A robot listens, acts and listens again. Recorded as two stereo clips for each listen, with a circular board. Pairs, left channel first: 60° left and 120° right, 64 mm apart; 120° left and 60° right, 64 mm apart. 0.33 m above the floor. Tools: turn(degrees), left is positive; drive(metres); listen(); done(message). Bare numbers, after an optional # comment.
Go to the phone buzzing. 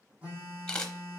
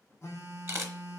# The phone buzzing: 170° left.
turn(170)
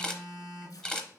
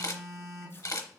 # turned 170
# The phone buzzing is now 40° right.
turn(-40)
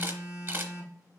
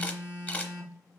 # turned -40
# The phone buzzing is now 10° left.
turn(10)
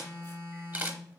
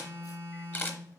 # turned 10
drive(1.0)
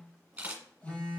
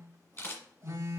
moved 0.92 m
# The phone buzzing is now 10° right.
turn(-10)
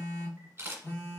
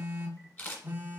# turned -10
drive(1.0)
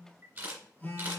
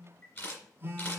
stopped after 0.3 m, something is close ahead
done("Arrived at the phone buzzing, straight ahead.")